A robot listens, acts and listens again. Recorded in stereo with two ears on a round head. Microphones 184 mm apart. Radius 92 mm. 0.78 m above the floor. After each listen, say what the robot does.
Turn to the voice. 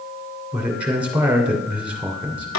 Turn 30° right.
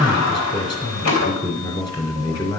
Turn 20° left.
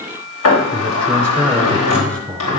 Facing the man speaking.